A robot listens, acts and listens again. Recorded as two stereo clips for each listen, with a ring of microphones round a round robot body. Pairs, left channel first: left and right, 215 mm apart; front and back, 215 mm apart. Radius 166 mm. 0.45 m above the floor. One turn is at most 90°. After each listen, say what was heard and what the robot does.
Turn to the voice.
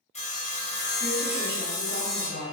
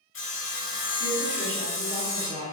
The woman speaking: 50° left. Turn 50° left.
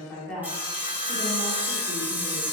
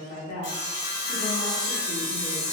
Found it: a woman speaking, straight ahead.